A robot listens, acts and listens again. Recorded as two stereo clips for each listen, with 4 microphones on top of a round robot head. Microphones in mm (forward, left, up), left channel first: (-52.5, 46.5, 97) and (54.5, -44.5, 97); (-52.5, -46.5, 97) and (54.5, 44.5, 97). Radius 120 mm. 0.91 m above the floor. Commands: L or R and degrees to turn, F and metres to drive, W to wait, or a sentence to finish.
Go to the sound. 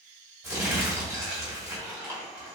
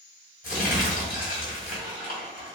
R115
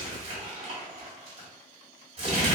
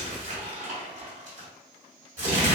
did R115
F1.0
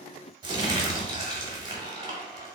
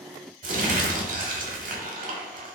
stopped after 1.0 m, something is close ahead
L15
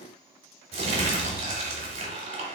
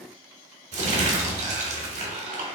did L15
Arrived at the crumpling, straight ahead.